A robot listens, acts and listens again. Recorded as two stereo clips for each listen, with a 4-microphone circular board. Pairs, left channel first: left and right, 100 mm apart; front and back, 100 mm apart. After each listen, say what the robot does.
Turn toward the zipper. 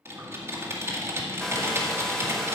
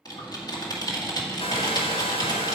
Keep listening.
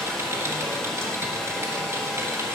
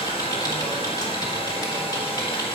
Keep listening.
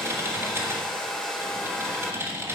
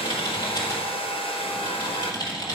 I can't make out a zipper to turn to.